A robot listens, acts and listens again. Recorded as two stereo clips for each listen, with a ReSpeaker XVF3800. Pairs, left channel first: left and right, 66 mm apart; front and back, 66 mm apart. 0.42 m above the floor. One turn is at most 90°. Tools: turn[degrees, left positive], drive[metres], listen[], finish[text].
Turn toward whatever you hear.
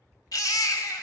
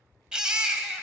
Thought: The baby crying: 105° left.
Action: turn[90]
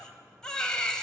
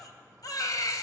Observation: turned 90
Thought: The baby crying is now 15° left.
Action: turn[15]
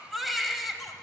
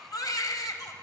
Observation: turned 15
Action: finish[Found it: a baby crying, straight ahead, 1 to 2 m away.]